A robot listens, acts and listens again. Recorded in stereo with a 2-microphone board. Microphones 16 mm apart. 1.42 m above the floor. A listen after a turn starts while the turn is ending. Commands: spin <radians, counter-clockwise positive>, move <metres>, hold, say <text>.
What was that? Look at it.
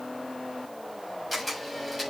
spin -0.52
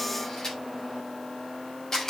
spin 0.52
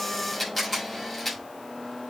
say Facing the camera shutter.